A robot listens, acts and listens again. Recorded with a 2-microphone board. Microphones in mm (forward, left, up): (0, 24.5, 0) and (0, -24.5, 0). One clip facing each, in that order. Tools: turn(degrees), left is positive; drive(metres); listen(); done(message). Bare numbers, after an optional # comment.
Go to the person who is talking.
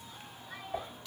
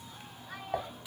# The child speaking: about 60° right or 120° right.
turn(-60)
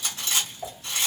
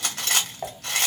listen()
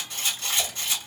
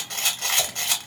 listen()
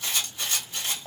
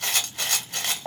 done("I heard a child speaking, but can't make it out now. It was about straight ahead or 60° right. I did not reach it.")